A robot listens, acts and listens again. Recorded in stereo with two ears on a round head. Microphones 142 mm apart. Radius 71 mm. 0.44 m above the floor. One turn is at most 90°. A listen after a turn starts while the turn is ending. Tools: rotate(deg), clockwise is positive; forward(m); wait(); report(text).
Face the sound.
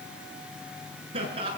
rotate(35)
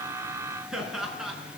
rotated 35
report("Facing the laughter.")